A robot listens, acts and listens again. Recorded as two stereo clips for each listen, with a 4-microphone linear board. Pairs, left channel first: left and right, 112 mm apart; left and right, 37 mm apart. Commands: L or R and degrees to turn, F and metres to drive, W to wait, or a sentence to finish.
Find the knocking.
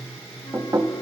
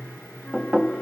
R30
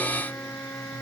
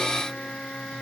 W
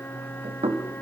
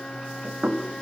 R115
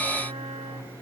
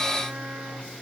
W
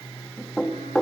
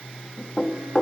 Facing the knocking.